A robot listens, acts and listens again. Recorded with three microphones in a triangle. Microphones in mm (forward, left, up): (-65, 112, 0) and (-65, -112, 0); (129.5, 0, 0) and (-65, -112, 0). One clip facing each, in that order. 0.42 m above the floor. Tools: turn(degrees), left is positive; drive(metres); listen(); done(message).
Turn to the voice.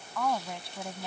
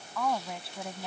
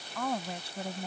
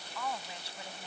done("Facing the woman speaking.")